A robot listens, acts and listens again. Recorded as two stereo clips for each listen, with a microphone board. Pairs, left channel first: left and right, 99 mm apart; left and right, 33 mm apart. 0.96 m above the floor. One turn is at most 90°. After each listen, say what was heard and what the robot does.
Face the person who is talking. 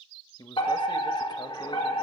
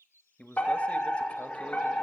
The man speaking: about 45° left or 135° left. Turn 45° left.
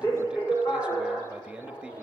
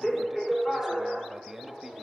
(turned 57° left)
Keep listening.
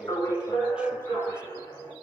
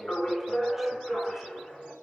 Keep listening.
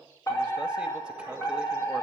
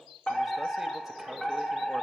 I heard a man speaking, but can't make it out now. It was about 10° right or 75° left.